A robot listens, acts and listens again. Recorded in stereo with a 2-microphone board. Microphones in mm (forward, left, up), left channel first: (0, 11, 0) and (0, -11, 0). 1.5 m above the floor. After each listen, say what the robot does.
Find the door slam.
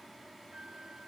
Keep listening.
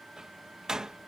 Turn 35° right.
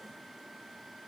Keep listening.
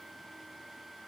I heard a door slam, but can't make it out now. It was about straight ahead or 110° right.